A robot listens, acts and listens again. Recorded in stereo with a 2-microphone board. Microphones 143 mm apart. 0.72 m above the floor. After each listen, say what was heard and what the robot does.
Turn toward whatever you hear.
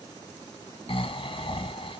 The snoring: about 40° left or 140° left. Turn 40° left.
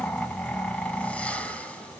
So it is at 10° left. Turn 10° left.
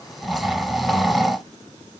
Facing the snoring.